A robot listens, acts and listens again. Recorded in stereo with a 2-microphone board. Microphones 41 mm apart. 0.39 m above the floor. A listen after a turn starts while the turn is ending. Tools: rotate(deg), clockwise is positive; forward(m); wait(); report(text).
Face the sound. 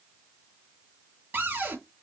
rotate(55)
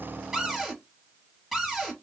report("Found it: a cupboard door, straight ahead.")